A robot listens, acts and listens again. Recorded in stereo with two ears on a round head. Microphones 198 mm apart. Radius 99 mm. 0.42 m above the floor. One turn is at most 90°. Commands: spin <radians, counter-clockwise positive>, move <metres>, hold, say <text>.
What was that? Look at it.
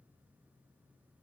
hold
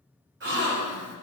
spin -0.96
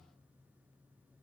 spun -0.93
hold
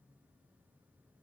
say I heard a gasp, but can't make it out now. It was about straight ahead or 70° right.